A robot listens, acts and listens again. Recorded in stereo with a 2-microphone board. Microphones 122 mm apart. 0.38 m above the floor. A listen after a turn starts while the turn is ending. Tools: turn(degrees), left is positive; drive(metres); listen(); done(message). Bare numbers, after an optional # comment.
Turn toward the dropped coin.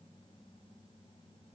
listen()
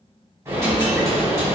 # The dropped coin: about 25° right or 155° right.
turn(-25)
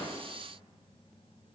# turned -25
listen()
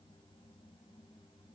done("I heard a dropped coin, but can't make it out now. It was about straight ahead or 130° right.")